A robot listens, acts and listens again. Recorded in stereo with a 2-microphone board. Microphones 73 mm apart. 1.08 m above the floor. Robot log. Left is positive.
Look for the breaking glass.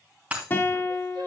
note: The breaking glass: about 20° right or 160° right.
cmd yaw -20
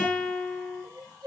cmd idle
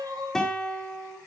end: I heard breaking glass, but can't make it out now. It was about straight ahead or 140° right.